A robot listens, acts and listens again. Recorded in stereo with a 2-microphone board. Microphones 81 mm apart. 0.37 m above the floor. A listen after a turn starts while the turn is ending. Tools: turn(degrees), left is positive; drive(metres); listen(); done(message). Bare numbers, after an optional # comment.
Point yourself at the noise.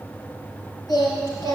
# The singing: about 50° left or 130° left.
turn(50)
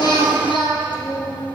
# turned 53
# So it is at 85° left.
turn(85)
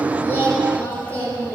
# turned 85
# The singing is now 25° left.
turn(25)
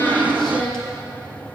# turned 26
# The singing is now 10° left.
turn(10)
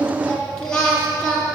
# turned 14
# The singing is now 10° left.
turn(10)
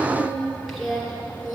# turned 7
done("Facing the singing, 2 to 4 m away.")